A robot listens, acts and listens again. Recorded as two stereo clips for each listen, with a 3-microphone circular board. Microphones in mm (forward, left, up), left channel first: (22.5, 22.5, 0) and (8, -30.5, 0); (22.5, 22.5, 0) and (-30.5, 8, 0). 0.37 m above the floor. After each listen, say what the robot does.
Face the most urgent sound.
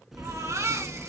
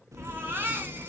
Turn 115° right.
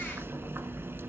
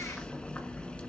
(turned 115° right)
Keep listening.
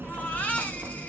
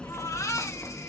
Turn 15° left.
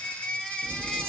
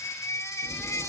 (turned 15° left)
Facing the baby crying.